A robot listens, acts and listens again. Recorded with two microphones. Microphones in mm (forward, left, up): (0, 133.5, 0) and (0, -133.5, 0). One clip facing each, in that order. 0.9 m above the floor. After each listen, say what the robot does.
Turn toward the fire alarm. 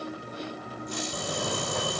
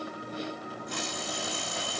Turn 65° left.
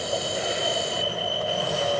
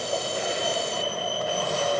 Found it: a fire alarm, straight ahead.